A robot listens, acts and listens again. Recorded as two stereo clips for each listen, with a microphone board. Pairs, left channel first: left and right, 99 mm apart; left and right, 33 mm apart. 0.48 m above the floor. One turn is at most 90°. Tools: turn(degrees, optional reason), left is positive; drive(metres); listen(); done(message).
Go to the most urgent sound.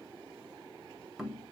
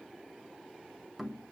listen()
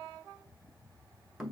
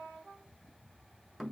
listen()
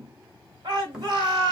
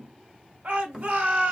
turn(degrees=-40, reason="The shout: about 40° right or 140° right.")
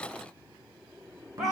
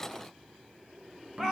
drive(metres=1.0)
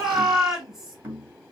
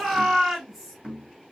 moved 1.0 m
drive(metres=1.0)
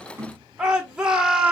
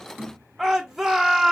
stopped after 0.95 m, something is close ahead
turn(degrees=-10, reason="The shout is now 10° right.")
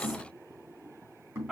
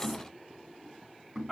done("I am next to the shout.")